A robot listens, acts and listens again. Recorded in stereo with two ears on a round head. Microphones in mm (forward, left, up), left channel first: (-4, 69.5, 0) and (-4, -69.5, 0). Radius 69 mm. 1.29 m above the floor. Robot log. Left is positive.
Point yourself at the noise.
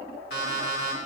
note: The alarm clock: about 70° left or 110° left.
cmd yaw +70
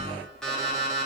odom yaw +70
end: Found it: an alarm clock, straight ahead.